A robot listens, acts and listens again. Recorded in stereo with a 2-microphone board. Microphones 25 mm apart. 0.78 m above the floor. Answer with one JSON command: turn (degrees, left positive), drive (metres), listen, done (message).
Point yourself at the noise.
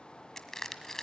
{"turn": 20}
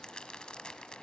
{"turn": 140}
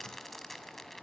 {"turn": 10}
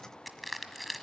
{"done": "Facing the crushing."}